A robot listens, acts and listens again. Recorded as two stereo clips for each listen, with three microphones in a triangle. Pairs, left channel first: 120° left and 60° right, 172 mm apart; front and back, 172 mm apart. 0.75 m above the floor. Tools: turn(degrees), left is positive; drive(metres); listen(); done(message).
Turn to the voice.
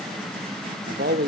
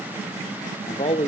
turn(degrees=-50)
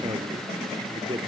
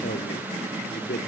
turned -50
done("Facing the man speaking.")